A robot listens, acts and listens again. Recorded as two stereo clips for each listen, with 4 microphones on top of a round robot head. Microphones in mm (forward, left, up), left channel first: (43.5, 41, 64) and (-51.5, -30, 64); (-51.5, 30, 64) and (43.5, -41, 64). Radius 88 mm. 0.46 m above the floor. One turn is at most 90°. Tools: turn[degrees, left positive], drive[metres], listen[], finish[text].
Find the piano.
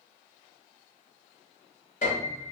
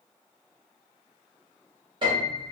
Thought: The piano: 15° left.
Action: turn[15]
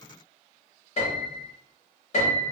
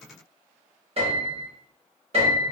Action: finish[Facing the piano, 1 to 2 m away.]